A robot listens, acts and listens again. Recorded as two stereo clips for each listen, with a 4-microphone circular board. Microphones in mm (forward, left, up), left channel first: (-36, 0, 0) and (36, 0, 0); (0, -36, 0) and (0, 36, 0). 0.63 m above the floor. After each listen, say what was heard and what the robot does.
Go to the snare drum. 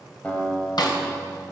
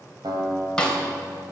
The snare drum: 170° right. Turn 170° right.
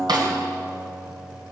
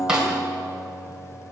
The snare drum is now 10° left. Turn 10° left.
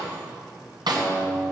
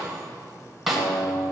Drive 1.0 m forward.
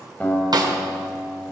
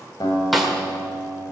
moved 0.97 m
Drive 1.0 m forward.
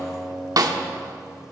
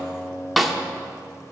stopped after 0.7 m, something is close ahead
I am next to the snare drum.